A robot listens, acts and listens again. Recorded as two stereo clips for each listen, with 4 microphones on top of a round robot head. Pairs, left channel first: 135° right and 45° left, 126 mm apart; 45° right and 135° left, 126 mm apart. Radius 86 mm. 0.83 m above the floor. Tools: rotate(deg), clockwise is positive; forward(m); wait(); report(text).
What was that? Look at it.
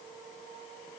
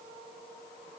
wait()
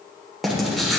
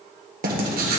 rotate(-135)
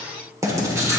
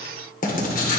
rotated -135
rotate(25)
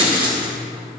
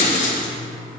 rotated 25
rotate(10)
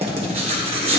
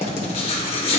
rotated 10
report("Facing the writing, 1 to 2 m away.")